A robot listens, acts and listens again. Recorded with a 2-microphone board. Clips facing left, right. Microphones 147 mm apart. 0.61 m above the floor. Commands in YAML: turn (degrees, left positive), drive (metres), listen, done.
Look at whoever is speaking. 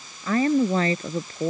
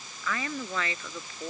turn: 40
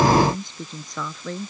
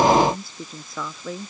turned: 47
done: "Facing the woman speaking."